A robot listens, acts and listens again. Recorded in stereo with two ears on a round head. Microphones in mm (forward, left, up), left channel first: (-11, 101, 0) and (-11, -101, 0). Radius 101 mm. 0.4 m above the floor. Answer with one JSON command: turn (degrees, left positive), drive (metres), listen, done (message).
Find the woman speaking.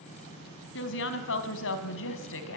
{"turn": 65}
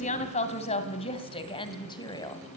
{"turn": 15}
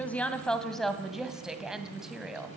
{"done": "Found it: a woman speaking, straight ahead, 2 to 4 m away."}